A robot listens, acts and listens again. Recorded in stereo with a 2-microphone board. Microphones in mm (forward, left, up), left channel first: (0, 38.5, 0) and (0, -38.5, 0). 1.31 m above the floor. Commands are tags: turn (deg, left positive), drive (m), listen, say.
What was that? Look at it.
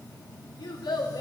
<turn deg="90"/>
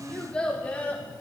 <turn deg="20"/>
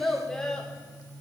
<turn deg="10"/>
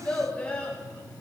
<turn deg="15"/>
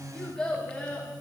<turn deg="15"/>
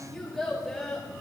<say>Facing the child speaking, 2 to 4 m away.</say>